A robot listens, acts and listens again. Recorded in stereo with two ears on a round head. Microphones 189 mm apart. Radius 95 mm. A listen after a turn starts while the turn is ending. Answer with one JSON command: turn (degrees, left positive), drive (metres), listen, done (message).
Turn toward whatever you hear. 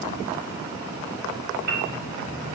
{"turn": -45}
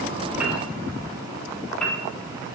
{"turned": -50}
{"done": "Facing the piano."}